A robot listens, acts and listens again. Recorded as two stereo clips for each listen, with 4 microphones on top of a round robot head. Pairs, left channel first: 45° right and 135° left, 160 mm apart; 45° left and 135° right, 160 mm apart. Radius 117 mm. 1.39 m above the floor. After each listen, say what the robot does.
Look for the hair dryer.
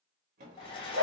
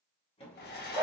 Turn 15° left.
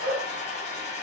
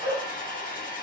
Found it: a hair dryer, straight ahead, 1 to 2 m away.